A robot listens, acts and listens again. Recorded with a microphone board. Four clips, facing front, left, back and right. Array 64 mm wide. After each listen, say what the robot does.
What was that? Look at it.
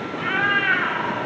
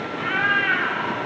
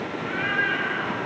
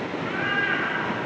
Turn 20° left.
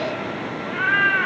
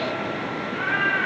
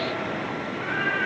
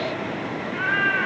Turn 20° right.
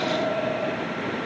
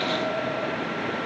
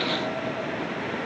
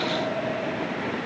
Keep listening.
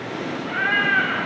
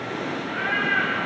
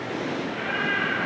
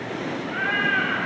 Turn 15° right.
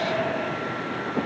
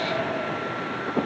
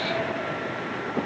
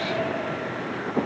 Keep listening.
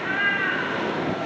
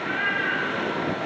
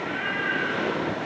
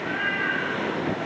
Turn 10° right.
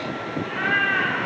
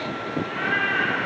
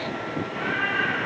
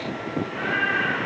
Facing the cat meowing, over 4 m away.